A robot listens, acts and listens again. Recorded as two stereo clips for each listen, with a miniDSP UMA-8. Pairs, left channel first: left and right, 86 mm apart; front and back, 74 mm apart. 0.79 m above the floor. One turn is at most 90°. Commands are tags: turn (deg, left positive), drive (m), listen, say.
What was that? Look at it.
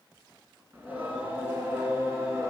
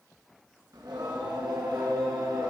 <turn deg="-90"/>
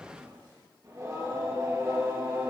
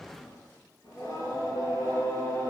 <turn deg="-30"/>
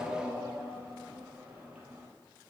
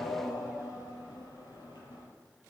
<turn deg="-15"/>
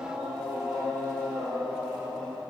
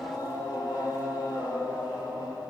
<say>Found it: singing, straight ahead.</say>